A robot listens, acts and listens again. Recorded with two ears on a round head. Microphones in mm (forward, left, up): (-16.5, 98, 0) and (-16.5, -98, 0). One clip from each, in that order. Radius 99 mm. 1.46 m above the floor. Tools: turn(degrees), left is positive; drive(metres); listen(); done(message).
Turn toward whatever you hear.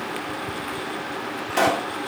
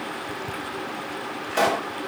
turn(degrees=30)
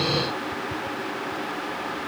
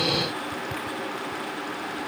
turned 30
listen()
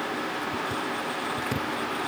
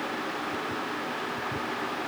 done("I heard a pop, but can't make it out now. It was about 20° right or 140° left.")